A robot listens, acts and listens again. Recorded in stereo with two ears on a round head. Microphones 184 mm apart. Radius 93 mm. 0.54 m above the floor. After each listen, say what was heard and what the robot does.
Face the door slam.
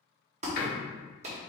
The door slam: about 55° left or 125° left. Turn 55° left.
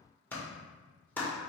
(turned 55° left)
Keep listening.
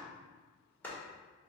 I heard a door slam, but can't make it out now. It was about straight ahead or 70° left.